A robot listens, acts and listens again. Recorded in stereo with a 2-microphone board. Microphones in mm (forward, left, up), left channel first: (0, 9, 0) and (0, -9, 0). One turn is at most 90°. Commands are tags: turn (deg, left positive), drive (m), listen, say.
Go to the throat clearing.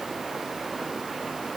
<listen/>
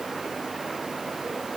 <listen/>
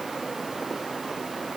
<say>I can't make out throat clearing.</say>